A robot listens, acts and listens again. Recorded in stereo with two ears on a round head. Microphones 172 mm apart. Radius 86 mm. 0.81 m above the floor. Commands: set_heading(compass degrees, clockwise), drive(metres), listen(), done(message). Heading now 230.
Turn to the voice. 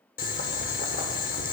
listen()
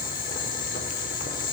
listen()
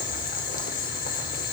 done("I can't make out anyone speaking, only boiling.")